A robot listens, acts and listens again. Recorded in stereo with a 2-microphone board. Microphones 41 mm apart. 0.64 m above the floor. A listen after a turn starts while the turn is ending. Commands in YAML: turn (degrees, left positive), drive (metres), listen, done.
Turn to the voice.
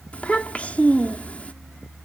turn: 30
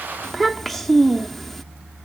done: "Found it: a child speaking, straight ahead."